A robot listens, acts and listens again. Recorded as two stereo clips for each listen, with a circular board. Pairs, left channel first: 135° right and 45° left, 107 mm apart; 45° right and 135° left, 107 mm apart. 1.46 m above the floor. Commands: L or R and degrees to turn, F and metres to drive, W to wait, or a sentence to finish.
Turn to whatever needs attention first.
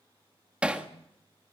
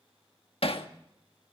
W
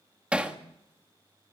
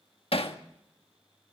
W
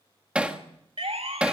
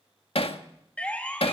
L35
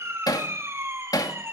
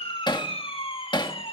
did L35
R20
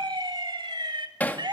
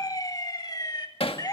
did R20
Found it: a siren, straight ahead.